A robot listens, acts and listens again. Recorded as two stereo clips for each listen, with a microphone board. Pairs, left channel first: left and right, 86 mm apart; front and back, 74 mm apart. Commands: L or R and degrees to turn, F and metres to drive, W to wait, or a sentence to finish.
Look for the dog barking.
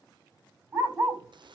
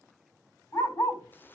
R30
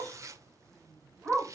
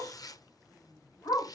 R10
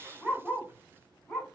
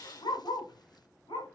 Found it: a dog barking, straight ahead.